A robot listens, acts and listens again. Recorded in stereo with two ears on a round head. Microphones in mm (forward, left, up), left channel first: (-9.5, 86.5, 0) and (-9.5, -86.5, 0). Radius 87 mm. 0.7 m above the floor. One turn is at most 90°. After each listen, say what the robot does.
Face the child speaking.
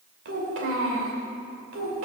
Turn 90° right.
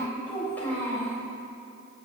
Turn 10° left.
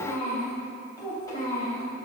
Turn 20° left.
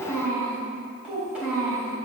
Found it: a child speaking, straight ahead, 2 to 4 m away.